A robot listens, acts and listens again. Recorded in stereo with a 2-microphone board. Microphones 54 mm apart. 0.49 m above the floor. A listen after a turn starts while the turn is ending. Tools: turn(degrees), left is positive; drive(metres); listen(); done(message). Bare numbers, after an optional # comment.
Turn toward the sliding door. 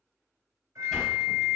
turn(30)
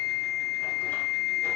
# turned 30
listen()
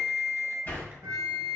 # So it is at 140° left.
turn(140)
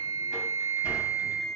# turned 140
# The sliding door is now 30° right.
turn(-30)
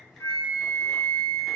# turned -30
listen()
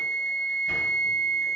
listen()
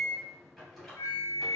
done("Facing the sliding door, 1 to 2 m away.")